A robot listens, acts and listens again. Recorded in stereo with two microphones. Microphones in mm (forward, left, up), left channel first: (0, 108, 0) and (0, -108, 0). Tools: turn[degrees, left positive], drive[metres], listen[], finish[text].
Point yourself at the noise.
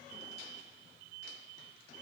Action: listen[]
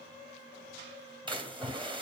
Thought: The splash: about 25° right or 155° right.
Action: turn[-25]
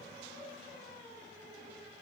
Action: listen[]
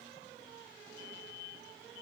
Action: finish[I heard a splash, but can't make it out now. It was about straight ahead or 130° right.]